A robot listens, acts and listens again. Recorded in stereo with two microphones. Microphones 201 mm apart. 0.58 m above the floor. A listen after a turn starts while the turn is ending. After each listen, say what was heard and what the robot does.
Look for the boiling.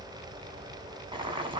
The boiling: about 25° right or 155° right. Turn 25° right.
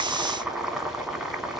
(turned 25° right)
Found it: boiling, straight ahead.